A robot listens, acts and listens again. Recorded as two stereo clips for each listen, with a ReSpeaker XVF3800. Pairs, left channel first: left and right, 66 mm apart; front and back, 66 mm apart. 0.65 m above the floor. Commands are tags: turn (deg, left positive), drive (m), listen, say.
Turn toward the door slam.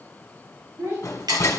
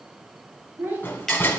<turn deg="50"/>
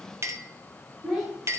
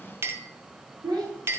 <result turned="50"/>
<say>I heard a door slam from this way, but can't make it out now.</say>